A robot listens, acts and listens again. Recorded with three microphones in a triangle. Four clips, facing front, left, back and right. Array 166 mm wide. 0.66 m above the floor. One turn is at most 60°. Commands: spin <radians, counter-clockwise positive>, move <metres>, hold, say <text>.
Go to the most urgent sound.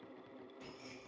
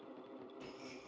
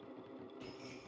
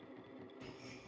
hold
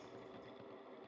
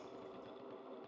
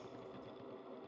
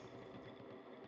hold
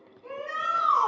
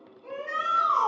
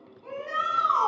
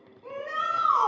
spin -1.05
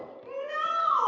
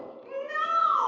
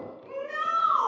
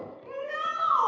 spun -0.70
spin -1.05
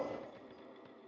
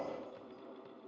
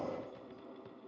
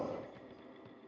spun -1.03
spin -0.44
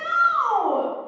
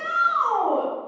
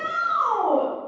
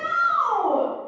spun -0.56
move 1.0
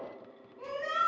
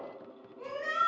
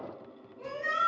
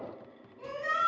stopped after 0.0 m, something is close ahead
say Blocked. The shout is further on, straight ahead.